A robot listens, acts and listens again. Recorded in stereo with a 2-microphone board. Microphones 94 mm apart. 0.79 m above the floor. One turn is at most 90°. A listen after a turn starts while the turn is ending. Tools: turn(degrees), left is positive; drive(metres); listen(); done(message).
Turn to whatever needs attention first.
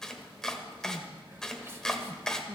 turn(degrees=-25)
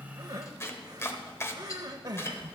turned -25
turn(degrees=-90)
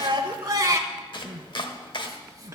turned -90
turn(degrees=-50)
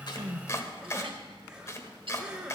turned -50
turn(degrees=-10)
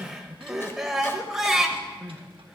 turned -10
done("Found it: crying, straight ahead.")